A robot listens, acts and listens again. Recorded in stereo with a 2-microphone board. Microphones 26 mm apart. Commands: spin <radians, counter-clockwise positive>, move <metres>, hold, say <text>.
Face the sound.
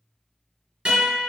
spin -0.70
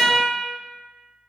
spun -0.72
spin -1.75
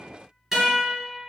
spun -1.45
spin -0.26
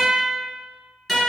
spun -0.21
say Found it: a guitar, straight ahead.